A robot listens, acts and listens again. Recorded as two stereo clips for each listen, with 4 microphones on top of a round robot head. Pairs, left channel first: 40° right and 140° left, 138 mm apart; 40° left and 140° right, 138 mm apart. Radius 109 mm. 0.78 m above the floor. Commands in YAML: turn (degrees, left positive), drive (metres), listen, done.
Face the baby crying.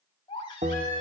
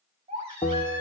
turn: -95
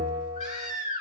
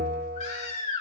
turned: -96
done: "Found it: a baby crying, straight ahead, over 4 m away."